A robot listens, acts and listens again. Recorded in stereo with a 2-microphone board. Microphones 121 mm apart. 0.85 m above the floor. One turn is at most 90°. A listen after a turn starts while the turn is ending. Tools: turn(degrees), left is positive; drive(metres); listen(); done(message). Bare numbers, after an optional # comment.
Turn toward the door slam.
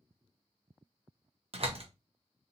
# The door slam: about 55° right or 125° right.
turn(-55)
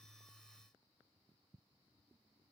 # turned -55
listen()
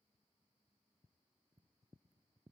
done("I heard a door slam, but can't make it out now. It was about straight ahead or 70° right.")